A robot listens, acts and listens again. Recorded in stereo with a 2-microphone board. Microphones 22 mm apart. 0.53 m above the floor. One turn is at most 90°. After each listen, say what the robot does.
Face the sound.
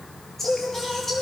Turn 15° left.
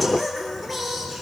Turn 30° left.
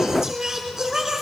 Turn 25° right.
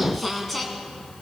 Turn 10° left.
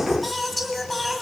Facing the singing, 1 to 2 m away.